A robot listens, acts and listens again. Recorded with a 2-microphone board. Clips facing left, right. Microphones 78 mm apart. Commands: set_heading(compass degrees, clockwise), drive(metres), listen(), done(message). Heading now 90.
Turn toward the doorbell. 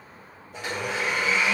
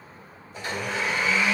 listen()
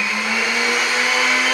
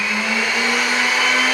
listen()
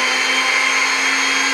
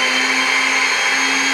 done("I can't make out a doorbell to turn to.")